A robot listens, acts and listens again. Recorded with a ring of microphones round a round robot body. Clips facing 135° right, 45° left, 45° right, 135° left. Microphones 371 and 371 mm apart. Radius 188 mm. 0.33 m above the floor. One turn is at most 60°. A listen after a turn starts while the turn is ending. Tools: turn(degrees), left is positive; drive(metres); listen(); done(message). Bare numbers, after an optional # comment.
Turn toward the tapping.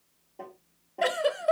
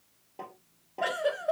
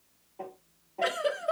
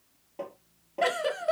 # The tapping: 105° left.
turn(60)
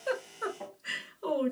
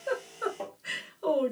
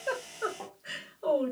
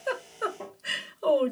# The tapping is now 30° left.
turn(30)
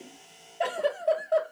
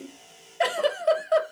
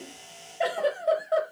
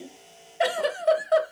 listen()
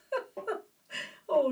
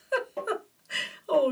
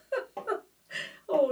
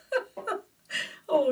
# The tapping is now 15° right.
turn(-15)
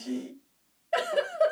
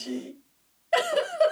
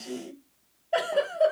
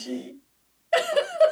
listen()
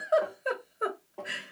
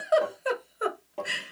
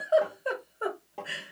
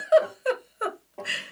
done("Found it: tapping, straight ahead, 1 to 2 m away.")